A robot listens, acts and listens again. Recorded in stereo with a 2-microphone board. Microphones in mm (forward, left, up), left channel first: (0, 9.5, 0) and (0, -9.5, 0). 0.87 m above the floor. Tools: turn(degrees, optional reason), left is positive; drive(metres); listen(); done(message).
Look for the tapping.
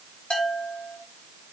listen()
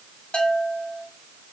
listen()
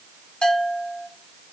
done("I can't make out tapping to turn to.")